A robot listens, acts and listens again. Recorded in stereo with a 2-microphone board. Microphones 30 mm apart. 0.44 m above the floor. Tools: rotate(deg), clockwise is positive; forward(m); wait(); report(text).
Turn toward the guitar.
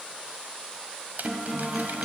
rotate(30)
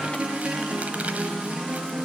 rotate(145)
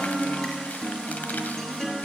rotate(-15)
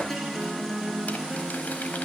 report("Facing the guitar, over 4 m away.")